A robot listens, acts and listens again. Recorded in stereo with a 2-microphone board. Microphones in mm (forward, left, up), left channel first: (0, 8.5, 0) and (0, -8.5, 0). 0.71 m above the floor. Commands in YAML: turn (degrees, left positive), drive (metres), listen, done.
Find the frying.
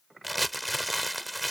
listen: true
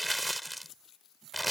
listen: true
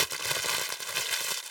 done: "I can't make out frying to turn to."